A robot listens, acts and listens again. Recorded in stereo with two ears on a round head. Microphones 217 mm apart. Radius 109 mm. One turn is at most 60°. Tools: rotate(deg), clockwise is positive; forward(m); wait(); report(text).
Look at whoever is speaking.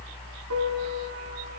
wait()
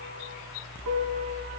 wait()
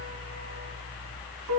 report("I can't make out anyone speaking to turn to.")